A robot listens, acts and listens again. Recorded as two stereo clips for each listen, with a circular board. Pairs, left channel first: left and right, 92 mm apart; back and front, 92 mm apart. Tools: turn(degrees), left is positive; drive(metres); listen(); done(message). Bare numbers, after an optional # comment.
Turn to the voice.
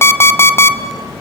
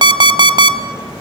listen()
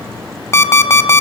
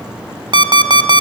listen()
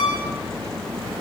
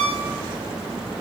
done("I can't make out anyone speaking, only an alarm clock.")